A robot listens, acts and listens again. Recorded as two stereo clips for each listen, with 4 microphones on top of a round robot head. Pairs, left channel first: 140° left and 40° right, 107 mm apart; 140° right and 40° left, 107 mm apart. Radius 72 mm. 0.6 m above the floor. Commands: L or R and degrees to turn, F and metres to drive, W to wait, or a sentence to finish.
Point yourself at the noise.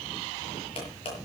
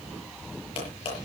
L180
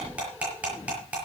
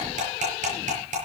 L40
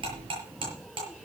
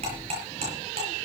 Facing the cutlery clinking, over 4 m away.